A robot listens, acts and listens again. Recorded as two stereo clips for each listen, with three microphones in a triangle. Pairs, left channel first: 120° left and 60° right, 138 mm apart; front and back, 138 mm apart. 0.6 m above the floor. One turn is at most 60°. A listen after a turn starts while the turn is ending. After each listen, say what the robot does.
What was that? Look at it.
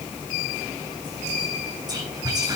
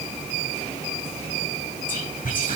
Facing the whispering.